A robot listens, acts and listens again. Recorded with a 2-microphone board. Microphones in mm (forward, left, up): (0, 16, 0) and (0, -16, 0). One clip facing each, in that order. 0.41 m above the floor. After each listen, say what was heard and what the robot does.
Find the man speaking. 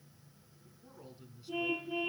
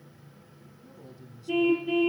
The man speaking: about 15° left or 165° left. Turn 15° left.
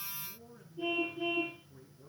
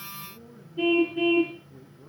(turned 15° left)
Turn 30° right.
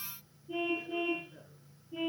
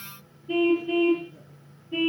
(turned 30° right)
Keep listening.
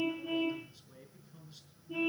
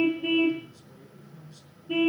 So it is at 10° left. Turn 10° left.
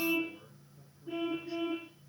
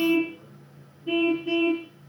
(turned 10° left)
Keep listening.
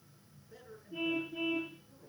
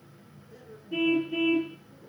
Found it: a man speaking, straight ahead.